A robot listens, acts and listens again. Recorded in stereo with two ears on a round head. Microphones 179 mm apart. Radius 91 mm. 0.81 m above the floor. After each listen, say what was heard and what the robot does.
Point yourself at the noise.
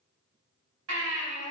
The baby crying: about 70° right or 110° right. Turn 70° right.
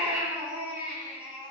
Found it: a baby crying, straight ahead, over 4 m away.